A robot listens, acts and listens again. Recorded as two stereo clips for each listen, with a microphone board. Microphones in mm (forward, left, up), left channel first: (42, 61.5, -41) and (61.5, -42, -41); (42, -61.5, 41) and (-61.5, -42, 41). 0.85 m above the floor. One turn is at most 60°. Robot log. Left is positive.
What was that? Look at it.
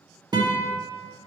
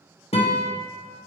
note: The guitar: 30° right.
cmd yaw -30
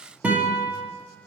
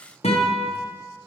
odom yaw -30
end: Found it: a guitar, straight ahead, under 1 m away.